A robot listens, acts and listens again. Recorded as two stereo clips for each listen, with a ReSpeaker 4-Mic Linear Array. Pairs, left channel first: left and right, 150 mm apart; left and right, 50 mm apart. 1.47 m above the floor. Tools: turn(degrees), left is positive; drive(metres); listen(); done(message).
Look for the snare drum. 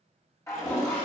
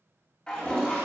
listen()
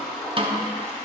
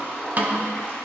turn(degrees=-35)
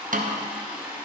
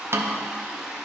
turn(degrees=-110)
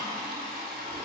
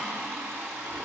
listen()
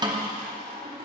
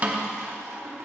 turn(degrees=-30)
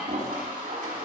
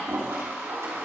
listen()
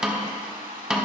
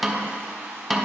done("Facing the snare drum.")